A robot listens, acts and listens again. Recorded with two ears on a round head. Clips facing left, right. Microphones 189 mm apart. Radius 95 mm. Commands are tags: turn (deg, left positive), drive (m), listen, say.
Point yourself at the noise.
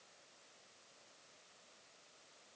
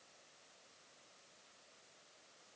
<listen/>
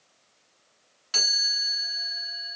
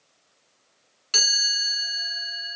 <turn deg="-35"/>
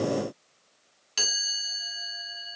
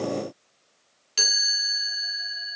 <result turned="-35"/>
<say>Found it: a chime, straight ahead, 1 to 2 m away.</say>